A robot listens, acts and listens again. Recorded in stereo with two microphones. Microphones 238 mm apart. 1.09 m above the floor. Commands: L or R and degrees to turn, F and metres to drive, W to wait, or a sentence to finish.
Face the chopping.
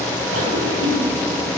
W
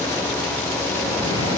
W
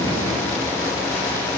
I can't make out chopping to turn to.